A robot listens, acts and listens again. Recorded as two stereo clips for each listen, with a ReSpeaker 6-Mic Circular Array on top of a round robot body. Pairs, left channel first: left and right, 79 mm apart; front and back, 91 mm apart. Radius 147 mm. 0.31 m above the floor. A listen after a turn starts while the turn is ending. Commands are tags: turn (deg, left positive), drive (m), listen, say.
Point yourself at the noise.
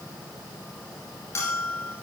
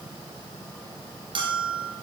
<turn deg="145"/>
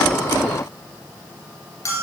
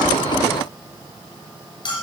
<turn deg="40"/>
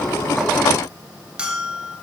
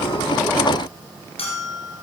<turn deg="-10"/>
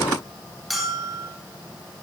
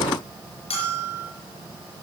<say>Facing the bell, 2 to 4 m away.</say>